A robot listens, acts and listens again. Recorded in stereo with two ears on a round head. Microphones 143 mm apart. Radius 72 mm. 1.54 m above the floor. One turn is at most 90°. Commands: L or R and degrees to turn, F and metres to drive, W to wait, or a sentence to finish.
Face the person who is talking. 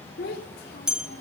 L65
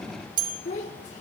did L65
L45
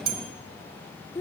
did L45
L20
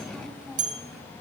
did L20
W
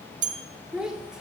Facing the child speaking.